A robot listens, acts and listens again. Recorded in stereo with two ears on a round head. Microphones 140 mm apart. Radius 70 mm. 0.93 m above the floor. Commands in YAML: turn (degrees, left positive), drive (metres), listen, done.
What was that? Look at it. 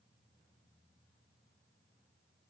listen: true
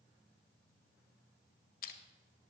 turn: 60
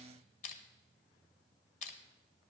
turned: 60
turn: 55
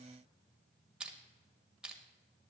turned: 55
done: "Facing the crushing."